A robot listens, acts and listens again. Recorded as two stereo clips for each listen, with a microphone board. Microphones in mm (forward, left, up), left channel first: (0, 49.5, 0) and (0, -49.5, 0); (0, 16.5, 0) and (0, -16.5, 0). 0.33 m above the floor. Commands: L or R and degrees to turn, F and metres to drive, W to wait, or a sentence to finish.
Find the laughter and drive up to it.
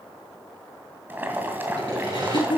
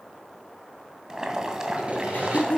L50
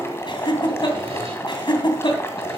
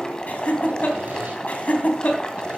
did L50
L65
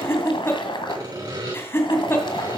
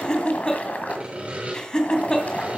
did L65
L30
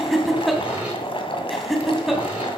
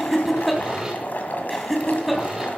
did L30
F1.0
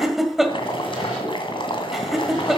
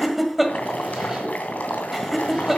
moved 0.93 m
F1.0
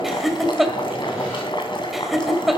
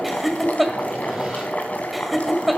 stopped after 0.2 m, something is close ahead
Arrived at the laughter, straight ahead.